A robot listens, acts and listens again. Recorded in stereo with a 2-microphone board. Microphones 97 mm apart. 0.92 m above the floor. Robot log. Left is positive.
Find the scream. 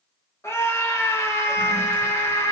note: The scream: about 30° left or 150° left.
cmd yaw +30
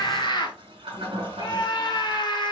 note: So it is at 115° left.
cmd yaw +115
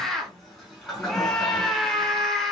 end: Found it: a scream, straight ahead, 1 to 2 m away.